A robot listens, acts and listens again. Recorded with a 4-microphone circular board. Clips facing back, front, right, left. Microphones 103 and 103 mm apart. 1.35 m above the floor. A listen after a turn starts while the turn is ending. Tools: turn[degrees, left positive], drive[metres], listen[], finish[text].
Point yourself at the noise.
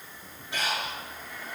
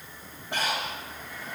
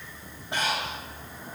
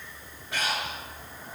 Thought: The breathing: 30° right.
Action: turn[-30]
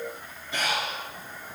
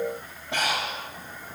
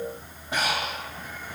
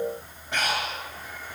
Thought: The breathing is now 10° right.
Action: turn[-10]
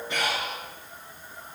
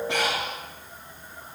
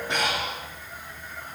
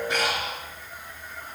Action: finish[Found it: breathing, straight ahead.]